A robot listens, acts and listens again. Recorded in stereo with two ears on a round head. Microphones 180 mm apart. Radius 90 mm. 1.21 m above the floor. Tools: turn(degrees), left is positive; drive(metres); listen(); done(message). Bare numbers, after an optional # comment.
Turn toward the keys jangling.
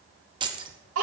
# The keys jangling: about 25° right or 155° right.
turn(-25)
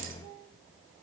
listen()
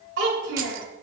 listen()
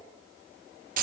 # So it is at 130° right.
turn(-130)
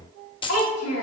# The keys jangling is now 30° left.
turn(30)
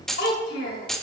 done("Facing the keys jangling, under 1 m away.")